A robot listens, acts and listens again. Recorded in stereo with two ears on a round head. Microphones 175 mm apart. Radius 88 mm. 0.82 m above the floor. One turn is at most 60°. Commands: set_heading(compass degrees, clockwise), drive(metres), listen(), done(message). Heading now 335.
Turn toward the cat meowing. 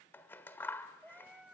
set_heading(5)
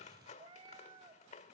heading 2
set_heading(62)
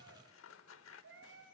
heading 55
set_heading(115)
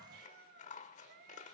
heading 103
set_heading(158)
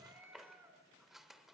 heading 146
set_heading(156)
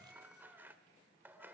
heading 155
listen()
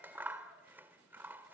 listen()
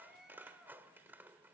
done("Facing the cat meowing, over 4 m away.")